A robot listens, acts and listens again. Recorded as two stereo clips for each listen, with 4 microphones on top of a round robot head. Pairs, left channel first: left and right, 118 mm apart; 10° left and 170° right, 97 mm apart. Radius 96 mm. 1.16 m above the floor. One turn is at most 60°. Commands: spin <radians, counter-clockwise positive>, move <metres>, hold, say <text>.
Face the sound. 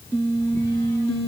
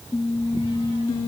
hold
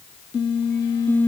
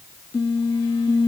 hold
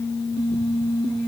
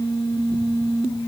say I can't make out anything to turn to.